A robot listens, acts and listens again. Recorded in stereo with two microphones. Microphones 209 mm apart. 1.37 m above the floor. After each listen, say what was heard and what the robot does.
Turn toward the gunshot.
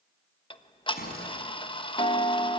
The gunshot: about 45° left or 135° left. Turn 45° left.
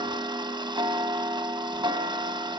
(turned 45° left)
Keep listening.
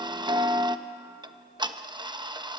I heard a gunshot, but can't make it out now. It was about straight ahead or 90° left.